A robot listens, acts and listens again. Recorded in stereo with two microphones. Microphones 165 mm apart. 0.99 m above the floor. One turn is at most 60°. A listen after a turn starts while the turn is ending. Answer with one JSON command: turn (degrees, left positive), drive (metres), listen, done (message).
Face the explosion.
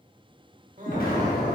{"turn": 60}
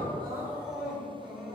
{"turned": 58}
{"listen": true}
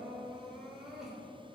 {"done": "I heard an explosion, but can't make it out now. It was about 5° left or 60° left."}